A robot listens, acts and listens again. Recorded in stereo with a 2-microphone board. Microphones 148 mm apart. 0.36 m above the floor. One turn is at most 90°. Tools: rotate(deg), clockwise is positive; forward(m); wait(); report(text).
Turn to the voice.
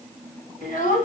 rotate(-60)
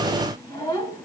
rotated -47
rotate(-25)
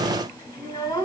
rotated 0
rotate(-25)
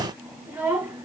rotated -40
rotate(15)
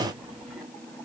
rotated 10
wait()
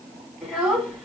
report("Found it: a child speaking, straight ahead, 1 to 2 m away.")